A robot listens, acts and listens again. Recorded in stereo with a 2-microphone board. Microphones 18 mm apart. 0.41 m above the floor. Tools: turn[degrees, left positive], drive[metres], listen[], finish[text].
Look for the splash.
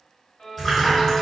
Action: turn[30]
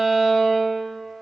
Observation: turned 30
Action: listen[]
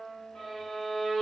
Action: finish[I heard a splash, but can't make it out now. It was about 20° right or 140° left.]